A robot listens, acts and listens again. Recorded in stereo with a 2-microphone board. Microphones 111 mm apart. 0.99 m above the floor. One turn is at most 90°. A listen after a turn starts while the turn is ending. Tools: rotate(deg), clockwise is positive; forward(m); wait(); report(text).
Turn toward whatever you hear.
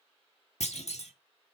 rotate(-90)
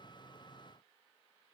report("Facing where the clunk came from. I can't hear it now.")